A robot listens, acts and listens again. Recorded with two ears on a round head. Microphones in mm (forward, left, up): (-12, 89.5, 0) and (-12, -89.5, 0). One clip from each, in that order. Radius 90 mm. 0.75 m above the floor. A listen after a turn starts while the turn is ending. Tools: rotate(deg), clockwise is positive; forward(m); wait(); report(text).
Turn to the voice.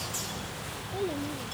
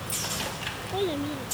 rotate(50)
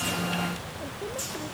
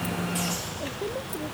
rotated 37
wait()
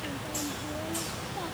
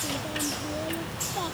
wait()
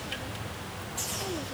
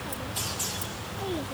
report("I heard a child speaking, but can't make it out now. It was about 10° right or 95° right.")